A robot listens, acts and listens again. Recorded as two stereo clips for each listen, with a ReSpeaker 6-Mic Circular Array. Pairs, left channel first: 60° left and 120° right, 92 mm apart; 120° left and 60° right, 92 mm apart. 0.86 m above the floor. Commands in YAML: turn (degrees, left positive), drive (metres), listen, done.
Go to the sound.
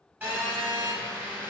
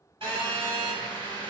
turn: -50
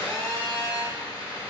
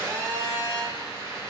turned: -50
drive: 1.0
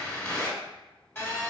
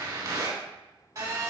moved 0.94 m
turn: -10
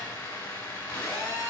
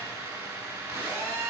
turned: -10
drive: 1.0
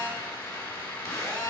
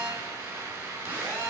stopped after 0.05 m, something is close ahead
done: "I am next to the phone buzzing."